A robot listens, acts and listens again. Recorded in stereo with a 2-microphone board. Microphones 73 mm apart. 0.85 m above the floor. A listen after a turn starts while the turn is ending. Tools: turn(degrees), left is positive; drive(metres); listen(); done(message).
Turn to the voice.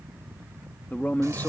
turn(degrees=25)
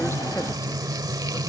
listen()
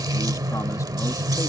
listen()
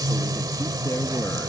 done("I heard a man speaking, but can't make it out now. It was about straight ahead or 130° left.")